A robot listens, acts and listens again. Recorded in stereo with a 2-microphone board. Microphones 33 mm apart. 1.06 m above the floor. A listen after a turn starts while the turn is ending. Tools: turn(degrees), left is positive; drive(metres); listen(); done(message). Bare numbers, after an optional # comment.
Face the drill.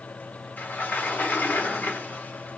listen()
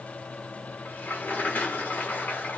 listen()
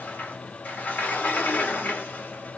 done("I can't make out a drill to turn to.")